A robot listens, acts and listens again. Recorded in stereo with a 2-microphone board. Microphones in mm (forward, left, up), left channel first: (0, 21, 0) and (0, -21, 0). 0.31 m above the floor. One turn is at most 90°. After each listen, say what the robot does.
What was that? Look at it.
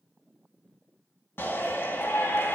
Turn 65° left.
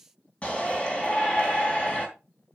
Turn 30° left.
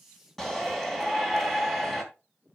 Facing the shout, 2 to 4 m away.